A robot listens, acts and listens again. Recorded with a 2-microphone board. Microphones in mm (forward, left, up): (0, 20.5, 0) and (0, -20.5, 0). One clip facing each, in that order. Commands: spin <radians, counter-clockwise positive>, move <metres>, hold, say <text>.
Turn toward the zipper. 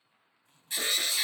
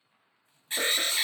spin 1.13
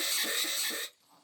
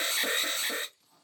spin 0.44
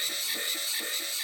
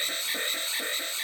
hold
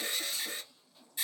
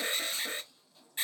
say Facing the zipper, 1 to 2 m away.